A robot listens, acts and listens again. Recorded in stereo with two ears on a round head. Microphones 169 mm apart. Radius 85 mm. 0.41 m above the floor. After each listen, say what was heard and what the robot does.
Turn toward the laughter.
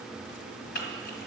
Keep listening.
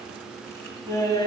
The laughter: about 20° left or 160° left. Turn 20° left.
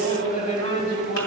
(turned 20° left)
So it is at 130° left. Turn 130° left.
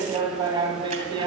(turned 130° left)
The laughter is now 25° right. Turn 25° right.
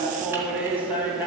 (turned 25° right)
The laughter is now 10° right. Turn 10° right.
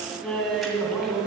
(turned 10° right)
Found it: laughter, straight ahead, 2 to 4 m away.